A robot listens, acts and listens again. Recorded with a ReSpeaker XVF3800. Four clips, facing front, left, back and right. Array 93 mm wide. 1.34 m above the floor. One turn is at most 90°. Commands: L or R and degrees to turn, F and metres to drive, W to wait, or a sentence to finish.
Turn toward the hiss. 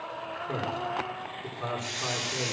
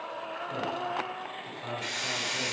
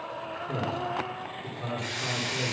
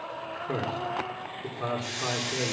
L90
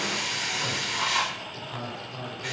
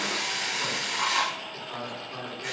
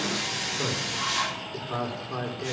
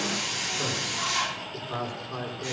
L35
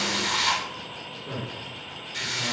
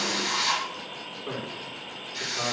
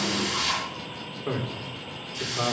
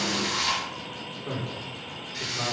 Facing the hiss, over 4 m away.